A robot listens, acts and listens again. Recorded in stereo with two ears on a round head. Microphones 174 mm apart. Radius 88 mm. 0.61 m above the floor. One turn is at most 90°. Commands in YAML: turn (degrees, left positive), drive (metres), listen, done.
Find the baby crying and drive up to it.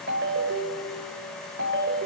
listen: true
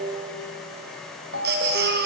turn: -60
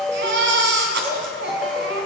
turn: -60
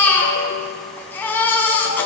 turn: 10
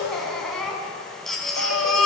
drive: 1.0
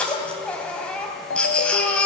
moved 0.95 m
drive: 1.0
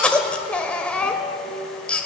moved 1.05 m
drive: 1.0
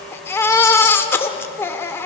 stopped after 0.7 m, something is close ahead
turn: 15
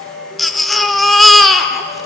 done: "Arrived at the baby crying, straight ahead."